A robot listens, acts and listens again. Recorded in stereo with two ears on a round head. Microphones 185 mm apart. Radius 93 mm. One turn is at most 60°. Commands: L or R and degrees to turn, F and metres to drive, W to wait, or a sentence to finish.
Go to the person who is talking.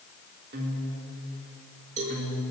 W
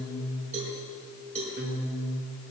W
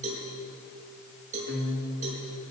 I can't make out anyone speaking, only a cowbell and a guitar.